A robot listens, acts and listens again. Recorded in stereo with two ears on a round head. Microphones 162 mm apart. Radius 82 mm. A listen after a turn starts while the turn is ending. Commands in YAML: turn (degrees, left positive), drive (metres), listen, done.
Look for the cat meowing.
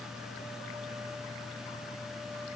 listen: true
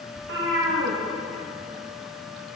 turn: -90
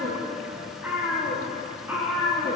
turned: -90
turn: -10
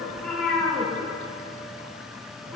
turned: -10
done: "Found it: a cat meowing, straight ahead, over 4 m away."